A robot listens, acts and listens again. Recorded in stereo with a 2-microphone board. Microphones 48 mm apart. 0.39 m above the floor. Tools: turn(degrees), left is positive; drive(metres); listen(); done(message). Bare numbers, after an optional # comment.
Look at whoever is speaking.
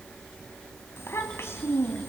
# The child speaking: about 65° left or 115° left.
turn(65)
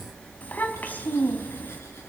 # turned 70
# So it is at 40° left.
turn(40)
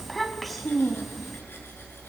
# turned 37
done("Found it: a child speaking, straight ahead.")